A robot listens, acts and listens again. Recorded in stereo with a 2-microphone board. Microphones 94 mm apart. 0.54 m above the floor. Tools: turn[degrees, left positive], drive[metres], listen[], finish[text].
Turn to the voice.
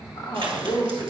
Thought: The man speaking: about 60° left or 120° left.
Action: turn[60]
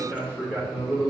Thought: So it is at 25° left.
Action: turn[25]
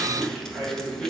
Action: finish[Facing the man speaking.]